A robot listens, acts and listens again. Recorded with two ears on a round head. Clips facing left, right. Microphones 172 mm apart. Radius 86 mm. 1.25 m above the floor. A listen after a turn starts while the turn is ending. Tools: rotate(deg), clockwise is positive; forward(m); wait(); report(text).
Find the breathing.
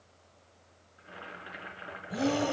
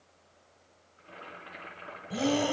rotate(30)
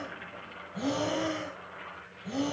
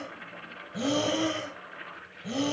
rotate(135)
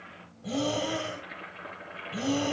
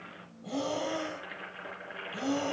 rotate(-25)
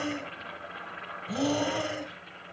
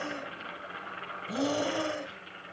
report("Facing the breathing.")